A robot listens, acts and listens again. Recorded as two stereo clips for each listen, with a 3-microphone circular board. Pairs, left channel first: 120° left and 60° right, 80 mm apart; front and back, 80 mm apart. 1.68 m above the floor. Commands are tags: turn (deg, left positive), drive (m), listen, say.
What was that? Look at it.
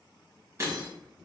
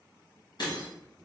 <turn deg="-10"/>
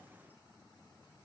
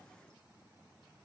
<say>I heard breaking glass from this way, but can't make it out now.</say>